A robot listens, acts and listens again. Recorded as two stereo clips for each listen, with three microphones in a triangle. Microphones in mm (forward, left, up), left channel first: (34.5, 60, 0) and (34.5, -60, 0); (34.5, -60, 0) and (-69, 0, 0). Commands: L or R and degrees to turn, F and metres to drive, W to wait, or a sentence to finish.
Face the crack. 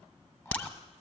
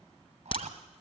L10
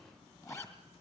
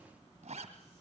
I heard a crack from this way, but can't make it out now.